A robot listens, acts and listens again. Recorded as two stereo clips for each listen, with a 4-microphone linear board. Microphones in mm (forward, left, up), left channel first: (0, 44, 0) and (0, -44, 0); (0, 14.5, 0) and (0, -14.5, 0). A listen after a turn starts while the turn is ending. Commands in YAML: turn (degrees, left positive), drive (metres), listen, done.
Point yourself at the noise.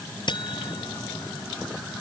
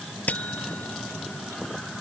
turn: 60
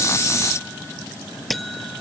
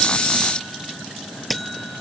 done: "Facing the buzzer."